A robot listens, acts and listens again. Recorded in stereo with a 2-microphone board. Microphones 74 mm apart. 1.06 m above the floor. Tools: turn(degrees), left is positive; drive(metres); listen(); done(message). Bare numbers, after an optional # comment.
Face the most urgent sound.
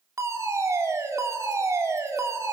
# The fire alarm: about 45° right or 135° right.
turn(-45)
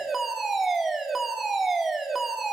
done("Facing the fire alarm, 2 to 4 m away.")